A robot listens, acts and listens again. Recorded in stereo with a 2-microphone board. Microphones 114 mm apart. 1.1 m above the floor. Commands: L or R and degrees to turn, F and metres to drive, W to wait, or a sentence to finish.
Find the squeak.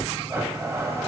W
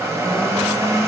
W
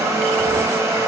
I can't make out a squeak, only a blender.